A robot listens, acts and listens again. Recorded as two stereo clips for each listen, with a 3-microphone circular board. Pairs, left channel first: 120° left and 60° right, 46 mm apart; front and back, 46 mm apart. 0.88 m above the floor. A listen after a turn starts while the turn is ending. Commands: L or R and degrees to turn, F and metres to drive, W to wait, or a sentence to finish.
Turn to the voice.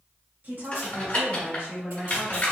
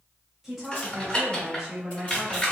R95
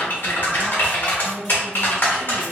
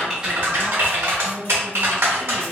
W
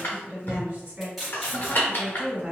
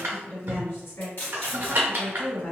R10
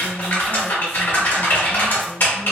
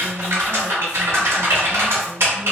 W
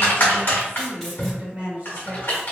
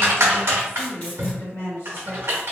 Found it: a woman speaking, straight ahead.